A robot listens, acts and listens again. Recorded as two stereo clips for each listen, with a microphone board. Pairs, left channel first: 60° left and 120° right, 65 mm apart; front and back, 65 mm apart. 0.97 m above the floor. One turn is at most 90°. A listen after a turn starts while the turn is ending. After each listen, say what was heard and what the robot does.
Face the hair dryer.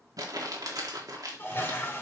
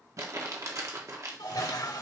Keep listening.
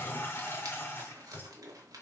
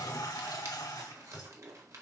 Keep listening.
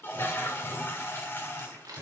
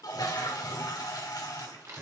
I can't make out a hair dryer to turn to.